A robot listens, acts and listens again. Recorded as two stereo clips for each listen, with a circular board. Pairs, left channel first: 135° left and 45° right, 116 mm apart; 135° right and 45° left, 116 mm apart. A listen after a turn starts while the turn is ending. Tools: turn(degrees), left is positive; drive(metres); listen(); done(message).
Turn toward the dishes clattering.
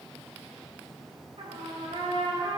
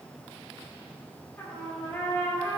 listen()
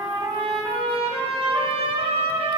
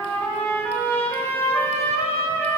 listen()
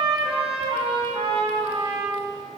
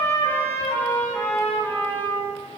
done("I can't make out dishes clattering to turn to.")